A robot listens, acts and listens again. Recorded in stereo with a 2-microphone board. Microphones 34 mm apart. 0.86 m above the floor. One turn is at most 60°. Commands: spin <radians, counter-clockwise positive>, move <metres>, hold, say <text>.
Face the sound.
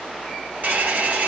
spin -0.87
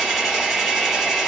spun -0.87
say Facing the hair dryer.